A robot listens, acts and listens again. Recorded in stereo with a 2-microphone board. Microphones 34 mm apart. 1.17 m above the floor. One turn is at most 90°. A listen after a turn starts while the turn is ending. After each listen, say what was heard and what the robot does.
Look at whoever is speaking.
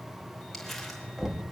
Keep listening.
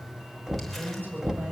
The woman speaking: about 70° right or 110° right. Turn 70° right.
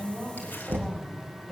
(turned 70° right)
Found it: a woman speaking, straight ahead.